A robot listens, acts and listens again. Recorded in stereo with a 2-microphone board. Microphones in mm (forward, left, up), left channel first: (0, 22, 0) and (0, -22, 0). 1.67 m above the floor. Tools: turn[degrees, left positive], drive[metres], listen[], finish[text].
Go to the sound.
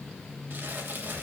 Thought: The crumpling: about 50° right or 130° right.
Action: turn[-50]
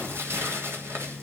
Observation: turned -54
Thought: So it is at 75° right.
Action: turn[-75]
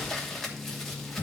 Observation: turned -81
Action: drive[1.0]
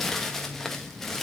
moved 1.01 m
Thought: The crumpling is now 10° left.
Action: turn[10]
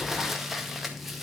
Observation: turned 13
Action: drive[1.0]
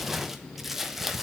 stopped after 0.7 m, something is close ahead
Action: finish[Arrived at the crumpling, straight ahead.]